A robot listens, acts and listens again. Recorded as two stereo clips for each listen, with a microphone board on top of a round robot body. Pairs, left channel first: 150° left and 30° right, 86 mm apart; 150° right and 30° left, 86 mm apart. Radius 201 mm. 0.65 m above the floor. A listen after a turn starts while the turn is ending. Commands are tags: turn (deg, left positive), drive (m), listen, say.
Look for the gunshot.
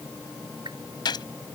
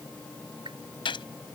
<turn deg="-170"/>
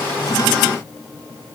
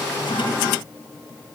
<say>I heard a gunshot from this way, but can't make it out now.</say>